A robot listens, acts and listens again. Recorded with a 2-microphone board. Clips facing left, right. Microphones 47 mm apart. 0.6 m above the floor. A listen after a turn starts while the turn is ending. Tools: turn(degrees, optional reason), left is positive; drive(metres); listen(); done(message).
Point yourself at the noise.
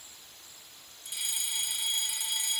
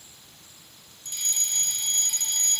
turn(degrees=30)
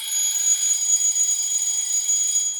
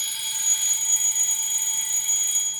turn(degrees=-25, reason="So it is at 25° right.")
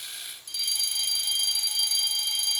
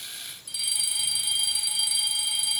turn(degrees=-10, reason="The fire alarm is now 10° right.")
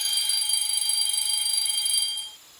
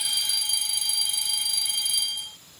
done("Found it: a fire alarm, straight ahead.")